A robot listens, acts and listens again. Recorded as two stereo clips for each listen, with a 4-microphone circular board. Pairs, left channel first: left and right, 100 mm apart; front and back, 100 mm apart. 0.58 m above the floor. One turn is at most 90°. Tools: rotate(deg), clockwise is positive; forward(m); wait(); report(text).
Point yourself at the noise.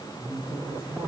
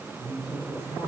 rotate(40)
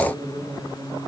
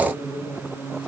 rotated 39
report("Found it: a woman speaking, straight ahead, over 4 m away.")